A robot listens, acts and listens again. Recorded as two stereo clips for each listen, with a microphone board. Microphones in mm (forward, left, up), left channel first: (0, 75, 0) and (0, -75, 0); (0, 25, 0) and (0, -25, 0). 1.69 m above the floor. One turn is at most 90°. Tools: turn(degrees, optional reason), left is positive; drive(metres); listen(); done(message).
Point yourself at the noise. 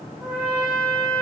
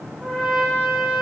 turn(degrees=-30)
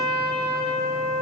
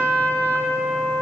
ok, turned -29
turn(degrees=-90, reason="So it is at 140° right.")
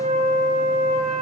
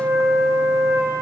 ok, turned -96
turn(degrees=-45, reason="The trumpet is now 45° right.")
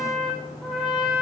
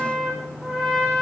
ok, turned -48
done("Found it: a trumpet, straight ahead, over 4 m away.")